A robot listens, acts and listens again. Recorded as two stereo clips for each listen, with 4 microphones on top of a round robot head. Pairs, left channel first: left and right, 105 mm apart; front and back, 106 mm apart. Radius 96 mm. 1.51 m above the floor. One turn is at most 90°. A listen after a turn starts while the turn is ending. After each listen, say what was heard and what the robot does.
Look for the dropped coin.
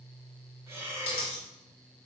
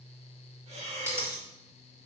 The dropped coin: 115° left. Turn 90° left.
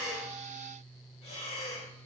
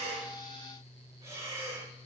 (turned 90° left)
Nothing new. It was at 25° left. Turn 25° left.
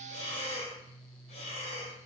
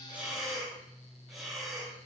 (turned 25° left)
Facing where the dropped coin came from. I can't hear it now.